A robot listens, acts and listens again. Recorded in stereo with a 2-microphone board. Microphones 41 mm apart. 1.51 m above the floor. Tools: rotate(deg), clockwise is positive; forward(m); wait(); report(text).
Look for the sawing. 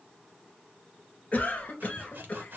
rotate(50)
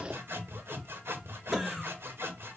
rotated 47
rotate(80)
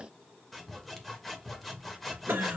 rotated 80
report("Found it: sawing, straight ahead.")